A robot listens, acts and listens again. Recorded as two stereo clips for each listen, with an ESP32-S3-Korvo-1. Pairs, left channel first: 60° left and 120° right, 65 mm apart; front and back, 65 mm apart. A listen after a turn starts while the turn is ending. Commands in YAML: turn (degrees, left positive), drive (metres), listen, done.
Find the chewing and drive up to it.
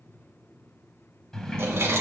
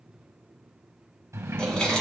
turn: -75
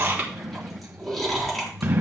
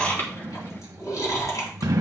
turn: -25
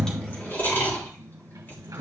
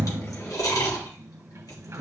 drive: 1.0
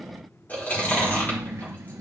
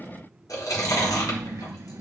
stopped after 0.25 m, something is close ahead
done: "Blocked. The chewing is further on, straight ahead."